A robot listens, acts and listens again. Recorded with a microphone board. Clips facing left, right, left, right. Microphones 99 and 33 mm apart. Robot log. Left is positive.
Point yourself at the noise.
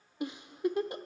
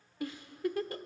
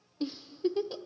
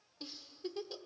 note: The giggle: about 20° left or 160° left.
cmd yaw +20
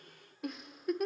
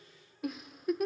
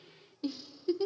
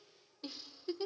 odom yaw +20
end: Found it: a giggle, straight ahead, under 1 m away.